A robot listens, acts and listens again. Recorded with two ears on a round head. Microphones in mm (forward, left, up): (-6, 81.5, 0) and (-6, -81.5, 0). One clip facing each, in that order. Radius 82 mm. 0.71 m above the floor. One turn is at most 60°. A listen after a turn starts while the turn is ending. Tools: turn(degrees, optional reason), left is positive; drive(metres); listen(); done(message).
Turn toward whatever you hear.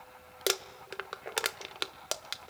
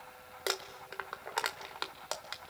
turn(degrees=35, reason="The crumpling: about 35° left or 145° left.")
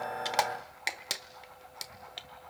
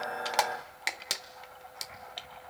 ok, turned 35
done("Facing the crumpling, under 1 m away.")